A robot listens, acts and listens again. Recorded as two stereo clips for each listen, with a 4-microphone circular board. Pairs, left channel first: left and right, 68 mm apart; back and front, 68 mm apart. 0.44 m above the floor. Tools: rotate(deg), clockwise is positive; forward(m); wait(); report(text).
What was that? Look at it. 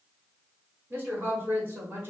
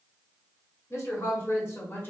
rotate(130)
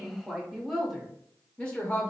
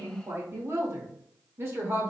rotate(-35)
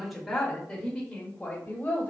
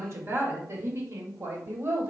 rotate(-25)
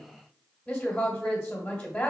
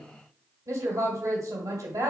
rotate(-15)
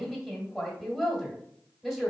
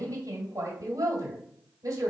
report("Facing the woman speaking.")